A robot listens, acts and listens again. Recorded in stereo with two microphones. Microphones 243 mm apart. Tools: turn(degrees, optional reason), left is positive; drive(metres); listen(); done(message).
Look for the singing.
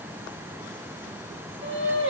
turn(degrees=-50, reason="The singing: about 50° right or 130° right.")
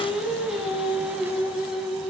done("Facing the singing, over 4 m away.")